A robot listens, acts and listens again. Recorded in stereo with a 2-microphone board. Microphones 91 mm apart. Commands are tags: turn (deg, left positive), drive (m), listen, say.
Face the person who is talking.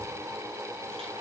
<listen/>
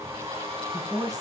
<turn deg="-45"/>
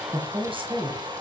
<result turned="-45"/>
<turn deg="-85"/>
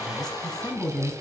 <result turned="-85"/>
<say>Found it: a woman speaking, straight ahead.</say>